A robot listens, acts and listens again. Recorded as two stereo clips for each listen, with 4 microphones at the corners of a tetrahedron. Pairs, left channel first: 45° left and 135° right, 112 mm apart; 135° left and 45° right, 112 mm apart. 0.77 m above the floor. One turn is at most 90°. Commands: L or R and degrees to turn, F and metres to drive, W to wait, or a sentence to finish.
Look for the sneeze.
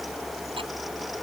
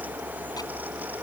W
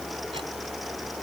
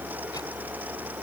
W
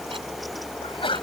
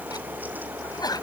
L85
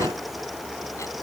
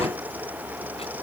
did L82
Facing where the sneeze came from. I can't hear it now.